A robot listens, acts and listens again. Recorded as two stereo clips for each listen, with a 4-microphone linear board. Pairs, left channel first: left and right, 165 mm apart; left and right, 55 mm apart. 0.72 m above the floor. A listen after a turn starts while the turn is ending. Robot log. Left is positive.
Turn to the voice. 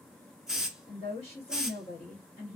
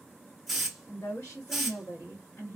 note: The woman speaking: about 40° left or 140° left.
cmd yaw +40
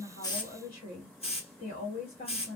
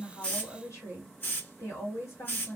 note: So it is at 90° left.
cmd yaw +90
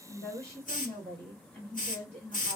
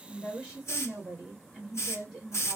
end: Facing the woman speaking.